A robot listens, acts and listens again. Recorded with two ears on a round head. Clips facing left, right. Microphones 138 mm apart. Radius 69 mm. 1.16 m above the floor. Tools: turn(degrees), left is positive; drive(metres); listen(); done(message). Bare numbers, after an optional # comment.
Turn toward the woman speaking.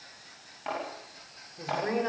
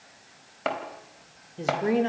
# The woman speaking: about 30° right or 150° right.
turn(-30)
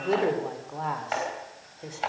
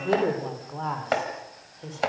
# So it is at 10° left.
turn(10)
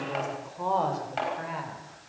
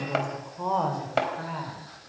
# The woman speaking is now 10° left.
turn(10)
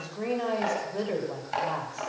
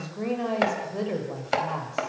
done("Facing the woman speaking, over 4 m away.")